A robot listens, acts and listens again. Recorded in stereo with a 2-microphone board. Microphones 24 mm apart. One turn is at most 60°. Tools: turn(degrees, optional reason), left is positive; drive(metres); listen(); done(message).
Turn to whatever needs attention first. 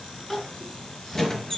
turn(degrees=30)
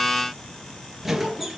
turn(degrees=60, reason="So it is at 145° left.")
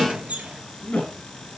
turn(degrees=60, reason="The crying is now 85° left.")
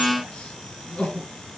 turn(degrees=60, reason="The crying is now 60° left.")
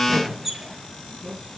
turn(degrees=-15, reason="The crying is now 15° right.")
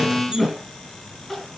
done("Facing the crying, over 4 m away.")